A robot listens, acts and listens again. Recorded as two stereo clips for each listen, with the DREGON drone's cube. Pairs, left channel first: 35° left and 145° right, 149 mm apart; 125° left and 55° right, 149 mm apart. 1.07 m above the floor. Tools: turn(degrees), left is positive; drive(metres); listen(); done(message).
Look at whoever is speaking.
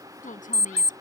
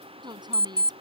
done("Found it: a woman speaking, straight ahead.")